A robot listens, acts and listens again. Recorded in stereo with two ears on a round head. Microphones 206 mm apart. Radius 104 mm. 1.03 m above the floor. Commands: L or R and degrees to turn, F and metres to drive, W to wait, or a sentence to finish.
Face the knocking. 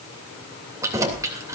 L50
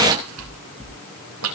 Facing the knocking.